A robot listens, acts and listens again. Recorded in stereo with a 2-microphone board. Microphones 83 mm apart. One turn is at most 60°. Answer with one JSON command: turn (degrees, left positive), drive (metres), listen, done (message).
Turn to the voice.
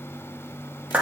{"listen": true}
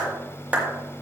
{"listen": true}
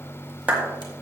{"done": "I can't make out anyone speaking to turn to."}